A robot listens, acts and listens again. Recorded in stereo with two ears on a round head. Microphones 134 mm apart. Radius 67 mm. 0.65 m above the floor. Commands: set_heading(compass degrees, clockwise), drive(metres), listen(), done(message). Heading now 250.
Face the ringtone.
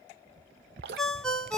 set_heading(220)
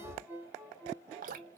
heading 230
set_heading(245)
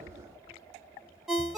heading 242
done("Facing the ringtone, under 1 m away.")